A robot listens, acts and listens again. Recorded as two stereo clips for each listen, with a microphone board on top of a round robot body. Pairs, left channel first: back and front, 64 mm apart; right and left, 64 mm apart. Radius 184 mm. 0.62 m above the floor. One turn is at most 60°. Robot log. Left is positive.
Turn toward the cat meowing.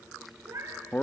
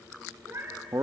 note: The cat meowing: 45° left.
cmd yaw +45
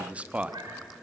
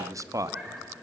note: The cat meowing is now 15° left.
cmd yaw +15
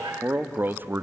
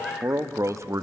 cmd idle
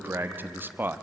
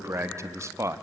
cmd idle
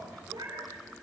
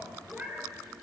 note: The cat meowing is now 20° left.
cmd yaw +20
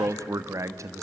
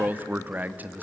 cmd idle
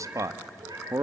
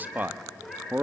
end: Found it: a cat meowing, straight ahead, over 4 m away.